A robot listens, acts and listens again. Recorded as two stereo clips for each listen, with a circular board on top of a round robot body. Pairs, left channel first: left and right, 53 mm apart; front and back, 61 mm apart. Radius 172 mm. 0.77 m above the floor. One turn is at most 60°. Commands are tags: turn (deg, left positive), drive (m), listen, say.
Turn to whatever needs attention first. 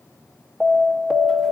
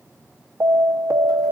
<turn deg="-60"/>
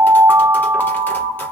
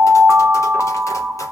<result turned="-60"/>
<turn deg="-60"/>
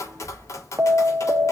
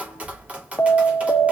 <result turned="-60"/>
<turn deg="-50"/>
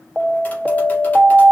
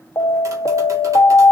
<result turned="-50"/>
<turn deg="-15"/>
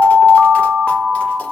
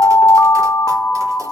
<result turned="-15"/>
<say>Facing the alarm.</say>